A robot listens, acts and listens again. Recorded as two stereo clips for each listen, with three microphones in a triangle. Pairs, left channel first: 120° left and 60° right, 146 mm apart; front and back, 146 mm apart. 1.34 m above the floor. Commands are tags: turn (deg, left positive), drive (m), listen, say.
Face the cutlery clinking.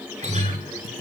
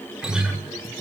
<listen/>
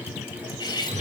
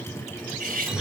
<turn deg="180"/>
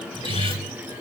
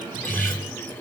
<listen/>
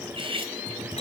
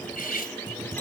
<turn deg="-10"/>
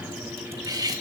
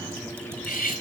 <say>Found it: cutlery clinking, straight ahead.</say>